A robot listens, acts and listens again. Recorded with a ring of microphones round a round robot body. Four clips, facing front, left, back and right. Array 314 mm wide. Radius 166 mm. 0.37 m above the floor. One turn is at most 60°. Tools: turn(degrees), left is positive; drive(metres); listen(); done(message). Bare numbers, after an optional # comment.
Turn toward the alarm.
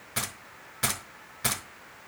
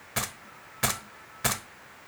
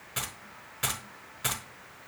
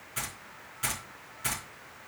listen()
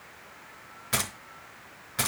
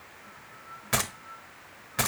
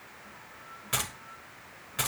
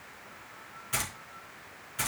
listen()
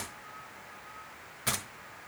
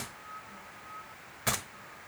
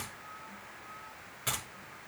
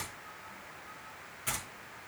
done("I can't make out an alarm to turn to.")